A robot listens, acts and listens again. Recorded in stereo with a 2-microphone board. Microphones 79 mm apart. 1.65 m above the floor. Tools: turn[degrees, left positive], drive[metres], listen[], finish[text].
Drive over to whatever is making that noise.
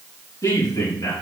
Thought: The man speaking: about 45° left or 135° left.
Action: turn[45]
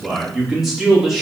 Action: drive[1.0]
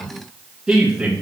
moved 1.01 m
Thought: The man speaking is now 10° right.
Action: turn[-10]
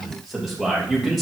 Action: drive[1.0]
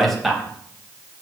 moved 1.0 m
Action: drive[1.0]
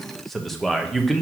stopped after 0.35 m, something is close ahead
Action: finish[I am next to the man speaking.]